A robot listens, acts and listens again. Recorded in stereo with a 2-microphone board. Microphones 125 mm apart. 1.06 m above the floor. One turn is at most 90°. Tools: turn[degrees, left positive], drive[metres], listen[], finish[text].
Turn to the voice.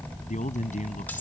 Action: turn[90]
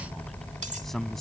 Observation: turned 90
Action: finish[Found it: a man speaking, straight ahead.]